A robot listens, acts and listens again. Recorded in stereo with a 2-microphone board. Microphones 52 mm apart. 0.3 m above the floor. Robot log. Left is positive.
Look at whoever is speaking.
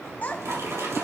note: The child speaking: about 30° left or 150° left.
cmd yaw +30
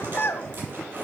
note: So it is at 115° left.
cmd yaw +115
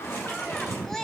note: The child speaking is now 10° left.
cmd yaw +10
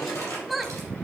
end: Facing the child speaking.